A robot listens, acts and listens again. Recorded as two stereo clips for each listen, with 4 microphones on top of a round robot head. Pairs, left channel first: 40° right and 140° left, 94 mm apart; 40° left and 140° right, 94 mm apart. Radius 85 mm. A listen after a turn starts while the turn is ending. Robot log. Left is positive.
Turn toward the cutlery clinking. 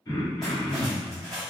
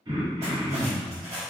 note: The cutlery clinking: 130° right.
cmd yaw -130
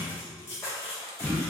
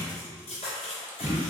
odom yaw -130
note: The cutlery clinking is now 25° left.
cmd yaw +25
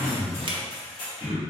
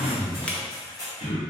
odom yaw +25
note: The cutlery clinking is now 15° right.
cmd yaw -15
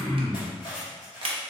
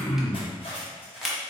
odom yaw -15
end: Facing the cutlery clinking, 1 to 2 m away.